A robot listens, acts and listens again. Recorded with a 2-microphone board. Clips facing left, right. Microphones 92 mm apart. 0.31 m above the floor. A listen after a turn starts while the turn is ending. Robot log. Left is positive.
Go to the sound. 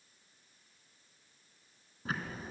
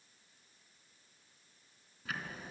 note: The ticking: about 35° left or 145° left.
cmd yaw +35
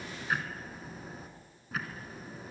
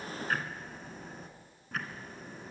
cmd fwd 1.0
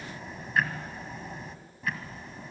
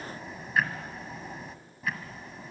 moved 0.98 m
cmd fwd 1.0
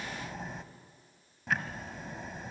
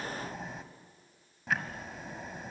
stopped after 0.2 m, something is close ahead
end: Arrived at the ticking, straight ahead.